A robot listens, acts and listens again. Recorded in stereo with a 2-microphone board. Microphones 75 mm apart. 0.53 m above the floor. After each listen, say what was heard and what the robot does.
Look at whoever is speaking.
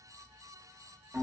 Keep listening.
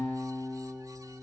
Keep listening.
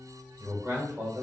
The man speaking: about 30° right or 150° right. Turn 30° right.
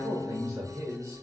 So it is at 115° right. Turn 115° right.
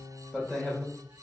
The man speaking is now 10° left. Turn 10° left.
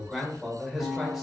Facing the man speaking.